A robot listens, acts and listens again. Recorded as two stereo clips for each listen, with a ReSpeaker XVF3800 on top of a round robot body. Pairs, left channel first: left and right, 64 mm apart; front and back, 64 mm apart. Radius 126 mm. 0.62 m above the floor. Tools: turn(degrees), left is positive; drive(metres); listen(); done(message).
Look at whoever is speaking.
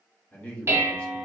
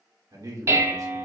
turn(degrees=160)
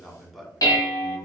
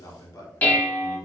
done("Facing the man speaking.")